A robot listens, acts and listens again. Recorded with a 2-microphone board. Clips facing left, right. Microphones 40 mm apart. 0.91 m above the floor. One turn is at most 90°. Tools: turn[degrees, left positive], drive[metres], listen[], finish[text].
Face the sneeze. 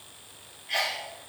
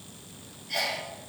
Thought: The sneeze: about 45° left or 135° left.
Action: turn[45]
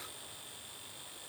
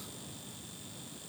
Action: listen[]
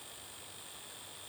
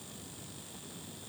Action: finish[I heard a sneeze, but can't make it out now. It was about straight ahead or 90° left.]